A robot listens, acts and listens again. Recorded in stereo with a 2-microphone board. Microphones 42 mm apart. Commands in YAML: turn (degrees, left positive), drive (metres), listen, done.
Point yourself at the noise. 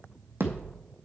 turn: -60
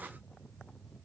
listen: true
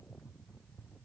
done: "I heard a thud, but can't make it out now. It was about straight ahead or 60° right."